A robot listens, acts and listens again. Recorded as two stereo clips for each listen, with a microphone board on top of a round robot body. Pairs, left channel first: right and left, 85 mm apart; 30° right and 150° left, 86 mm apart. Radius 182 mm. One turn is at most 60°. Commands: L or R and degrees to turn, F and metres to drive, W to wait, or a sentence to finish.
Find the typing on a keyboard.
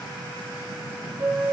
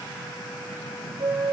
W
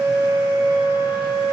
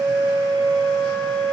W
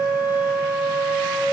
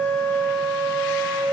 I can't make out typing on a keyboard to turn to.